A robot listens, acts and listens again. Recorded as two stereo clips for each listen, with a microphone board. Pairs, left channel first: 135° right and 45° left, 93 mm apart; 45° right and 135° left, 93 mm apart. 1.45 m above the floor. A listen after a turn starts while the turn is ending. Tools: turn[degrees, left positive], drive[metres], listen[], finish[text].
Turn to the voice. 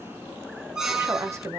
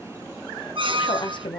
Thought: The woman speaking: 15° right.
Action: turn[-15]
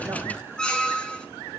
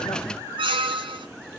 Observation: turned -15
Action: listen[]
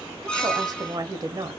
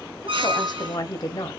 Action: finish[Facing the woman speaking, under 1 m away.]